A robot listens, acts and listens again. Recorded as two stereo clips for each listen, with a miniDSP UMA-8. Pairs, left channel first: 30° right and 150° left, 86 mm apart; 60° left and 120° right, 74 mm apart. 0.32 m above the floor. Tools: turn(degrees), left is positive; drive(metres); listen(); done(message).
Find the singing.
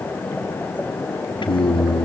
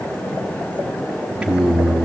turn(degrees=-35)
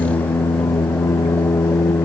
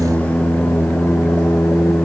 turn(degrees=20)
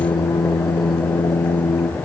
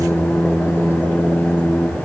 turn(degrees=15)
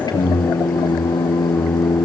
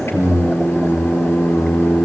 done("Found it: singing, straight ahead, 2 to 4 m away.")